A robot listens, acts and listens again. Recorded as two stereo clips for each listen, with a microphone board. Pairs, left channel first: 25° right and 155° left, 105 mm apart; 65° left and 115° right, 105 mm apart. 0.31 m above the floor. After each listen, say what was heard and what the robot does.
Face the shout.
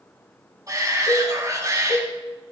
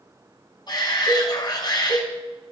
The shout: 105° left. Turn 105° left.
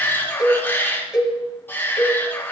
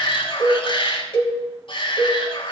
The shout is now 45° left. Turn 45° left.
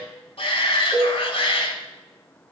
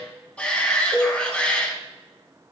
The shout is now 10° right. Turn 10° right.
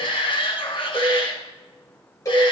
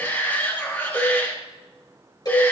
Found it: a shout, straight ahead.